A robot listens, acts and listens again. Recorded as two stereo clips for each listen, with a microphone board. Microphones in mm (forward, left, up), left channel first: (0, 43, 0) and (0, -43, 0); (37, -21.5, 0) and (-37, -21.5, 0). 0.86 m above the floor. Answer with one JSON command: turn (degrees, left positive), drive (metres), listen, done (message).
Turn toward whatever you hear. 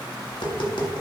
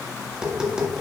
{"turn": 100}
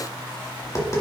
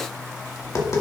{"turn": 40}
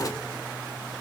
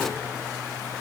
{"listen": true}
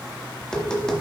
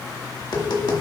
{"turn": 10}
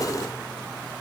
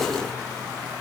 {"listen": true}
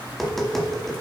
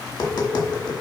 {"done": "Found it: tapping, straight ahead."}